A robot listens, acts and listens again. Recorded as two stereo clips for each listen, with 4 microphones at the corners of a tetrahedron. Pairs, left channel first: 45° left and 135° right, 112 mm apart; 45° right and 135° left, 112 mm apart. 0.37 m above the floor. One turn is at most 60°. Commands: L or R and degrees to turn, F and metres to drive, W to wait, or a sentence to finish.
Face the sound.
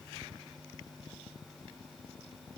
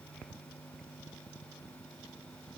W
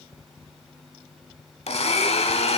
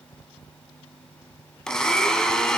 L40
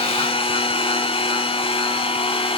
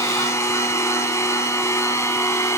L15
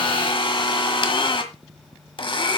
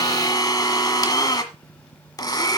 Facing the blender, 1 to 2 m away.